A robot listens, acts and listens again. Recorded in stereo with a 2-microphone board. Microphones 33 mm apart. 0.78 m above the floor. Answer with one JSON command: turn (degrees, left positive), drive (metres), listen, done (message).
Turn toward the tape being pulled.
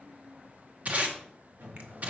{"turn": -40}
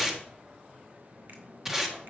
{"turn": -10}
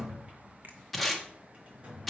{"done": "Found it: tape being pulled, straight ahead, 1 to 2 m away."}